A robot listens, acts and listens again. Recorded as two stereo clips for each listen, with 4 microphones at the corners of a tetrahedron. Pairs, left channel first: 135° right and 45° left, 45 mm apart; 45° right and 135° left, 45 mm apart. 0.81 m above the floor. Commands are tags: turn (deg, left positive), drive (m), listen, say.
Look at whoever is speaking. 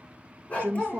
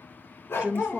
<turn deg="75"/>
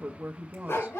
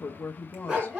<say>Found it: a woman speaking, straight ahead.</say>